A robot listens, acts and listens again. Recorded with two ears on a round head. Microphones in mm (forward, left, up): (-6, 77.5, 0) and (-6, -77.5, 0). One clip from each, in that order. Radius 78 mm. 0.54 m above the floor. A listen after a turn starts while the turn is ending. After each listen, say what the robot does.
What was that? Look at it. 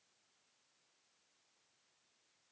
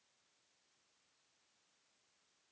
Keep listening.
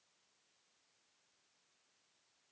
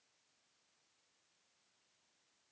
Keep listening.
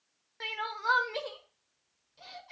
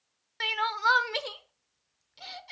Turn 60° right.
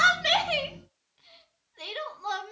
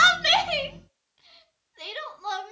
Turn 10° right.
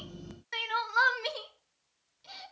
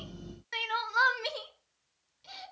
Found it: crying, straight ahead.